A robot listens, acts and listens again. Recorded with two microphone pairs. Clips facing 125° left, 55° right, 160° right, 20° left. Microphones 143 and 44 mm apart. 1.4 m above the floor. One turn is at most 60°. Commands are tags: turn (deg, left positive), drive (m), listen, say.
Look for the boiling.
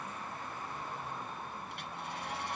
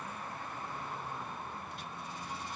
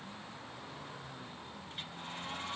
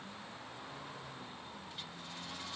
<listen/>
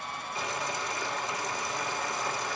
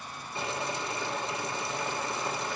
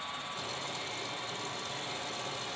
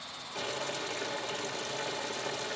<turn deg="10"/>
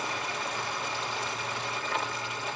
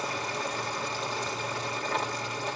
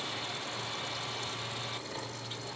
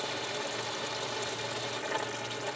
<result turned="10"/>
<say>Facing the boiling.</say>